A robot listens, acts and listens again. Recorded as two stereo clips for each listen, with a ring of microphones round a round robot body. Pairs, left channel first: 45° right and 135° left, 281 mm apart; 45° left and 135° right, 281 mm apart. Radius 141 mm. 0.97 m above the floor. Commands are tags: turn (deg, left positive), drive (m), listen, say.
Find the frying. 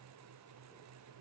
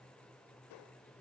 <listen/>
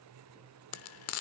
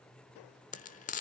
<turn deg="-15"/>
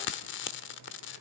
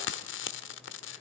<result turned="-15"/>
<say>Found it: frying, straight ahead.</say>